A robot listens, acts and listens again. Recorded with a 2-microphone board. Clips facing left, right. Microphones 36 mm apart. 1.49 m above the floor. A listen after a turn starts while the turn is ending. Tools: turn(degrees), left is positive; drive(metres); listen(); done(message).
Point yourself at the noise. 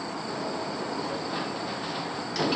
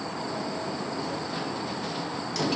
turn(degrees=20)
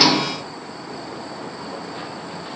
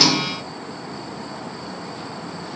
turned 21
listen()
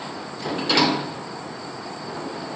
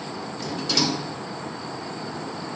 turn(degrees=140)
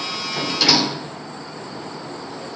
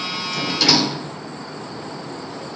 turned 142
done("Facing the sliding door.")